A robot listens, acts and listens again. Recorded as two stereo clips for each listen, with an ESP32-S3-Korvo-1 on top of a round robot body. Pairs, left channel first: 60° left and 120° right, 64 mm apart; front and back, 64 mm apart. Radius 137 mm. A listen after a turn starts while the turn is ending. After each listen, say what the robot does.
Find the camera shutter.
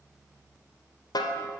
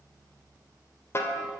Keep listening.
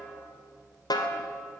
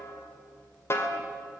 Keep listening.
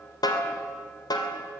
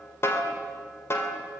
I can't make out a camera shutter, only a snare drum.